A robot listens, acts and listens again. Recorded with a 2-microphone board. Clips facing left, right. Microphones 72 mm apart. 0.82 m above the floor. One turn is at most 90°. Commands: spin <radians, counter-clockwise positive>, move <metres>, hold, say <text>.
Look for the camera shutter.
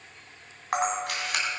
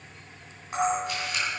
spin 1.22
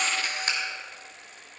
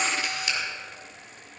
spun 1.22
spin 0.70
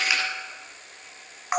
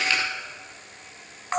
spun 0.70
spin 0.26
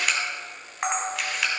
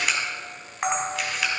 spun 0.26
say Facing the camera shutter, 2 to 4 m away.